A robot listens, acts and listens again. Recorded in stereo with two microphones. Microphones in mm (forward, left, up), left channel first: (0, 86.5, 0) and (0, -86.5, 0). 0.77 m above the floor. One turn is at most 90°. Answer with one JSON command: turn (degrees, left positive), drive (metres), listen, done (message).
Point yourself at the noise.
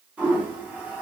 {"turn": -30}
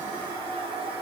{"turn": -90}
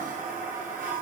{"turn": -65}
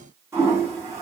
{"turn": -20}
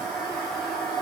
{"done": "Facing the toilet flushing, under 1 m away."}